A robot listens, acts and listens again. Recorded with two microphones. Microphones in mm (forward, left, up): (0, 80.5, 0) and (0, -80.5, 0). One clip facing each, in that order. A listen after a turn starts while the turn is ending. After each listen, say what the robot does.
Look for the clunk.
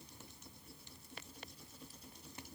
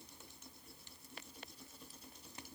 Keep listening.
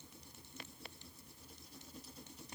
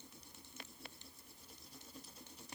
Keep listening.
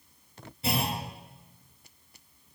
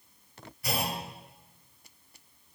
Turn 25° left.
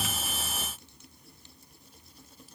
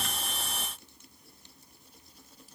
Keep listening.
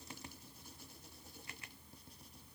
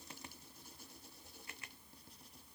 I heard a clunk, but can't make it out now. It was about straight ahead or 130° left.